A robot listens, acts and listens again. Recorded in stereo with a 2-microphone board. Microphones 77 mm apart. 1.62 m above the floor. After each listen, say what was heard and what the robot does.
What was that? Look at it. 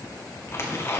The tearing paper: about 35° left or 145° left. Turn 35° left.
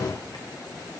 Keep listening.
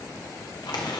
So it is at 110° left. Turn 110° left.
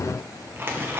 The tearing paper is now 30° right. Turn 30° right.
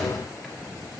Keep listening.
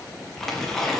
Facing the tearing paper, 1 to 2 m away.